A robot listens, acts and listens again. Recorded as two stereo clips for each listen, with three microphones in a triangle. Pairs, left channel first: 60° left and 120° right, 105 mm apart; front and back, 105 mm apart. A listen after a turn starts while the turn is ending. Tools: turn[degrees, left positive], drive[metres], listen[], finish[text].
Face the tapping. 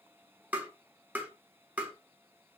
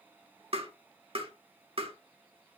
Thought: The tapping: 165° left.
Action: turn[165]
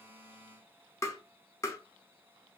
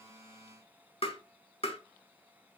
Action: finish[Facing the tapping, 1 to 2 m away.]